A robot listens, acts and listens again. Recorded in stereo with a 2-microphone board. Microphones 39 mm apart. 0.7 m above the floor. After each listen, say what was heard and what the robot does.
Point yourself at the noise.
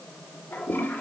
Turn 90° left.
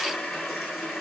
Facing the toilet flushing, 2 to 4 m away.